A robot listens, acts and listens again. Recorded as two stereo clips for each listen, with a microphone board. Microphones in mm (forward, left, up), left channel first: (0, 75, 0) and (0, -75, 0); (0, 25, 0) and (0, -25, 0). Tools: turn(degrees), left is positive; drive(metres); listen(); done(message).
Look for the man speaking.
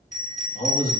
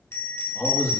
turn(degrees=75)
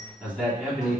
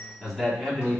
turn(degrees=15)
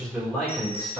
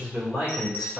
done("Facing the man speaking.")